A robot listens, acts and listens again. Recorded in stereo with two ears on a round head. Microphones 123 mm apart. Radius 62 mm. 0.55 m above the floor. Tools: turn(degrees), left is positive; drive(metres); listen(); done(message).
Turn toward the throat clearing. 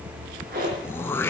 turn(degrees=20)
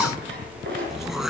done("Facing the throat clearing.")